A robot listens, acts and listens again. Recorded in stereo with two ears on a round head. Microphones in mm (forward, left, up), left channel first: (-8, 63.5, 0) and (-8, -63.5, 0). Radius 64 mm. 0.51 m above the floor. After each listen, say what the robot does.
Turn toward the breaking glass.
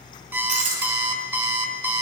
Turn 55° right.
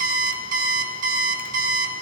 Keep listening.
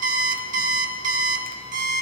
I heard breaking glass, but can't make it out now. It was about straight ahead or 70° right.